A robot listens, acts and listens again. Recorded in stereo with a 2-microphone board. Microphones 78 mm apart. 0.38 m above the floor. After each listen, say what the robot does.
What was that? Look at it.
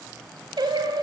Turn 70° right.
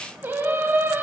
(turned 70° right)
Turn 30° right.
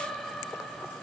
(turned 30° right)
Found it: singing, straight ahead.